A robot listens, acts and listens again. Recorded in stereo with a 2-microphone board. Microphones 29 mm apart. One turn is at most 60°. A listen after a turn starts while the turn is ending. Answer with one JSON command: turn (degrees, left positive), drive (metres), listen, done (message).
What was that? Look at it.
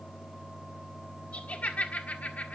{"turn": 60}
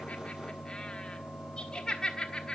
{"turn": 25}
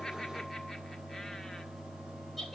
{"done": "Found it: laughter, straight ahead."}